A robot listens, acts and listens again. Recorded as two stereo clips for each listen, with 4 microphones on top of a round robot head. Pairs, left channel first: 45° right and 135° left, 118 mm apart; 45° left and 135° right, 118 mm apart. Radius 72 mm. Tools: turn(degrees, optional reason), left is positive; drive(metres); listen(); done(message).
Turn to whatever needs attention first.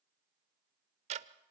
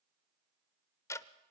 listen()
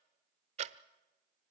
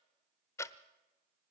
listen()
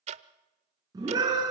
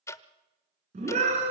turn(degrees=-165, reason="The scream: 165° right.")
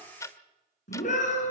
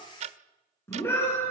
turn(degrees=-25, reason="The scream is now 25° right.")
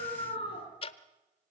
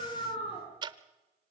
done("Facing the scream, over 4 m away.")